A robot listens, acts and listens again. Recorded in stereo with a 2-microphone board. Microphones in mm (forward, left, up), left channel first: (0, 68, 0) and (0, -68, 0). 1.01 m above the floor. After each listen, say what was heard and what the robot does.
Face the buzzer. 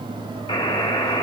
The buzzer: about 40° left or 140° left. Turn 40° left.
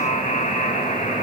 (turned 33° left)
So it is at 105° left. Turn 105° left.
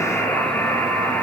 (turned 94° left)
The buzzer is now 10° left. Turn 10° left.
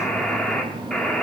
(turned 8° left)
Facing the buzzer.